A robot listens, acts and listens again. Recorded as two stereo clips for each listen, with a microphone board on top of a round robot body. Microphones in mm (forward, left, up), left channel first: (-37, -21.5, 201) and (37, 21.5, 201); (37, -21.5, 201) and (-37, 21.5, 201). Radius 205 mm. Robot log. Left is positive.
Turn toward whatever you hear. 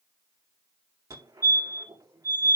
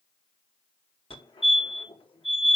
note: The fire alarm: 25° right.
cmd yaw -25
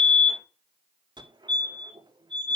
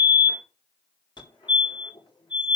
end: Found it: a fire alarm, straight ahead.